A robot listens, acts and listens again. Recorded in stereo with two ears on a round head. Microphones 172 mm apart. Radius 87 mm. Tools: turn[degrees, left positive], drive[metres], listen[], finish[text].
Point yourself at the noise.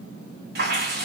Thought: The dripping: about 55° right or 125° right.
Action: turn[-55]
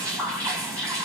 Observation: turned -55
Thought: So it is at 15° right.
Action: turn[-15]
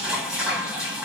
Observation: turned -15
Action: finish[Facing the dripping, 1 to 2 m away.]